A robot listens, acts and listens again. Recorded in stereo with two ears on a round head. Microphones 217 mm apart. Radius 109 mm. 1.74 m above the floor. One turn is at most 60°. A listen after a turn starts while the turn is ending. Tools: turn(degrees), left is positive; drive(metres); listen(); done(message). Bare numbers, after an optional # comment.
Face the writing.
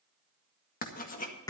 # The writing: about 35° left or 145° left.
turn(35)
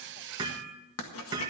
# So it is at 105° left.
turn(60)
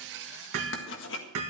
# The writing is now 60° left.
turn(60)
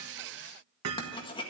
# The writing is now 20° left.
turn(20)
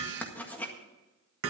done("Found it: writing, straight ahead.")